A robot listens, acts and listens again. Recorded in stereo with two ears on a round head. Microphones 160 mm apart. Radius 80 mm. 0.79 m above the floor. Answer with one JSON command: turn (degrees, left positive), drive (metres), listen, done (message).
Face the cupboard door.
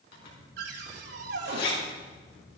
{"turn": -65}
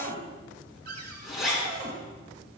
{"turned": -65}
{"turn": -55}
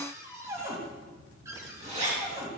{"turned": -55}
{"turn": -15}
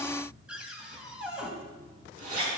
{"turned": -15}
{"done": "Found it: a cupboard door, straight ahead, 2 to 4 m away."}